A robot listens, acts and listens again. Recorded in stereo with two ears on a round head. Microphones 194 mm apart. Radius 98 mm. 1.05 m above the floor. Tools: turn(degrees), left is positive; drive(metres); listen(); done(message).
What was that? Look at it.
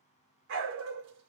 turn(degrees=-55)
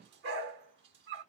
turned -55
turn(degrees=-60)
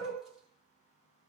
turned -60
done("Facing the dog barking, 1 to 2 m away.")